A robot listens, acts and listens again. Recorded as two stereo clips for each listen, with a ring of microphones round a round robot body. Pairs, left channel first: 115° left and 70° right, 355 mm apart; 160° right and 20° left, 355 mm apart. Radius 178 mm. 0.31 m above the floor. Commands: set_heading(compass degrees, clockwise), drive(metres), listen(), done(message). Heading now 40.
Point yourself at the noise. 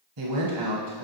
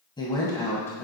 set_heading(115)
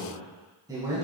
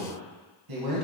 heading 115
set_heading(100)
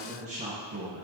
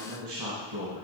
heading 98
done("Found it: a man speaking, straight ahead, 2 to 4 m away.")